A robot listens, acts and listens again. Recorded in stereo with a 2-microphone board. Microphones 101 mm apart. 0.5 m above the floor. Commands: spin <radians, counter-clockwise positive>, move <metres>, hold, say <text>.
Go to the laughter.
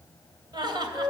spin -0.87
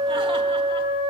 hold
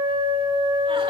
hold
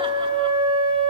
say I heard laughter, but can't make it out now. It was about straight ahead or 80° right. I did not reach it.